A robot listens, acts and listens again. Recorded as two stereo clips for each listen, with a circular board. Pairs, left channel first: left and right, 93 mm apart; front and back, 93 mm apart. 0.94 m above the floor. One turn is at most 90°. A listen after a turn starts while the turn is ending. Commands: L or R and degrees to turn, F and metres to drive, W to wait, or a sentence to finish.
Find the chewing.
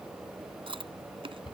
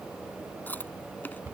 R70
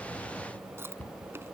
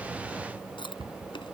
R25
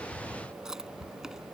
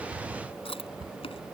Found it: chewing, straight ahead.